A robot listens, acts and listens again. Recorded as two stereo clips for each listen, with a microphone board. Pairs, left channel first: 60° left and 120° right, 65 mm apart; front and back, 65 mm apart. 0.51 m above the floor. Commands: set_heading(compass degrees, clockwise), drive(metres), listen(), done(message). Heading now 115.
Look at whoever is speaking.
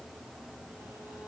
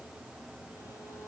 listen()
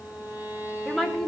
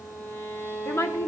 set_heading(130)
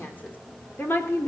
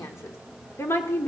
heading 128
set_heading(98)
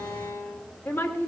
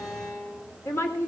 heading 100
set_heading(70)
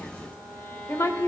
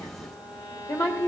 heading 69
set_heading(54)
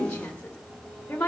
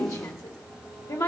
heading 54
done("Facing the woman speaking.")